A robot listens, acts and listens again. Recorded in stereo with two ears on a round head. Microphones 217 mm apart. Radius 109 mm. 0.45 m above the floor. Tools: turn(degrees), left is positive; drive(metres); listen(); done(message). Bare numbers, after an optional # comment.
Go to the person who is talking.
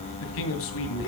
# The man speaking: about 60° left or 120° left.
turn(60)
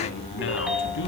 listen()
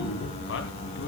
# So it is at 55° left.
turn(55)
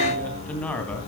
drive(1.0)
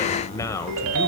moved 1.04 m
# The man speaking is now 15° left.
turn(15)
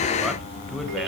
listen()
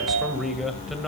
drive(1.0)
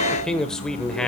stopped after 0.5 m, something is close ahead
done("Arrived at the man speaking, straight ahead.")